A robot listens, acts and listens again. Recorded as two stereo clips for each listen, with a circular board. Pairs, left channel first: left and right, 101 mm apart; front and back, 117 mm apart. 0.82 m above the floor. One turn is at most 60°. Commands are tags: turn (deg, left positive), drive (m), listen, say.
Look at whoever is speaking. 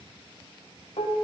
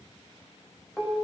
<listen/>
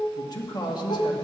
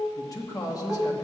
<turn deg="55"/>
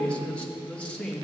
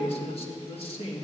<turn deg="15"/>
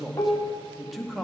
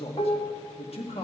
<say>Facing the man speaking.</say>